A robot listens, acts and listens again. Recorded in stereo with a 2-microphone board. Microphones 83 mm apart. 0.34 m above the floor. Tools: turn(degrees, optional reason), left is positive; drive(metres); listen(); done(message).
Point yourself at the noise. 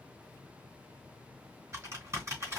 turn(degrees=-35, reason="The typing on a keyboard: about 35° right or 145° right.")
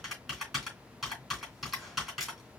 done("Found it: typing on a keyboard, straight ahead, 2 to 4 m away.")